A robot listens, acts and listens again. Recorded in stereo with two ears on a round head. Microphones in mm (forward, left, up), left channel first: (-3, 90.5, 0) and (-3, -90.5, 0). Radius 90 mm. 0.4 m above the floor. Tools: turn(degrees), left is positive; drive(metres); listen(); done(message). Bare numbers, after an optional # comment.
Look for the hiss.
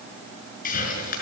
# The hiss: about 45° left or 135° left.
turn(45)
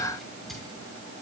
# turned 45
done("Found it: a hiss, straight ahead.")